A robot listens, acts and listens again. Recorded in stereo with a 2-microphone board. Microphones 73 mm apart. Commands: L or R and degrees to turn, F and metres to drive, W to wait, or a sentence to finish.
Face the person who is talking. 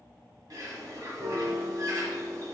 W
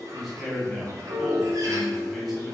L30
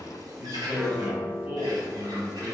R30
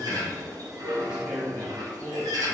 R10
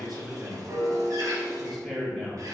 Facing the man speaking, 1 to 2 m away.